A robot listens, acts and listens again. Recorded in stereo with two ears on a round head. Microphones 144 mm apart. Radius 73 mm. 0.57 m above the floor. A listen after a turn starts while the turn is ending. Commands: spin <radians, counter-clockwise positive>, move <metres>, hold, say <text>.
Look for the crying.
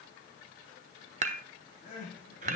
spin 0.87
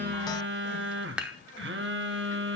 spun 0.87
hold
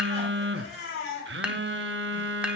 spin 1.31
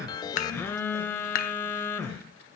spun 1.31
hold
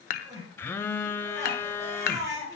spin -0.35
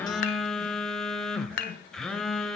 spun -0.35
spin -0.17
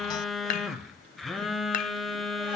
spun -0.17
hold
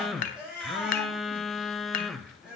say Facing the crying, over 4 m away.